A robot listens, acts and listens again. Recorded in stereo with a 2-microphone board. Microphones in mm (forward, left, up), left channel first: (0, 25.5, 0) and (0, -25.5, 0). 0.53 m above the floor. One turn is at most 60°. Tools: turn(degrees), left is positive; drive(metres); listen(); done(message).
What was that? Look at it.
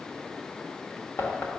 turn(degrees=45)
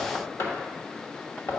turn(degrees=60)
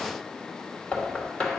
turn(degrees=30)
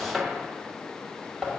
turn(degrees=-10)
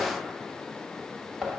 done("Facing the knocking, 1 to 2 m away.")